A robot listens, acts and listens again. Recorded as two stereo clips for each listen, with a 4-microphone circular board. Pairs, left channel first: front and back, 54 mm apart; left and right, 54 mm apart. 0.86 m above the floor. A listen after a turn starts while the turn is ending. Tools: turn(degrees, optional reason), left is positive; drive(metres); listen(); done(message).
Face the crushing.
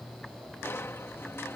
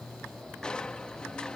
turn(degrees=20, reason="The crushing: 20° left.")
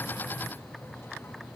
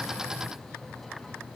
listen()
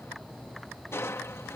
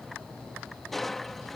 done("Found it: crushing, straight ahead.")